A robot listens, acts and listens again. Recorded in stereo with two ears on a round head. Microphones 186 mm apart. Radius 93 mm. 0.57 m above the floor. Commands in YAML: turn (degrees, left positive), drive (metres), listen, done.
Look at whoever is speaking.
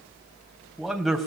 turn: 30
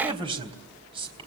turn: -25
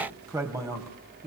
turn: -15
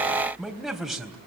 done: "Found it: a man speaking, straight ahead."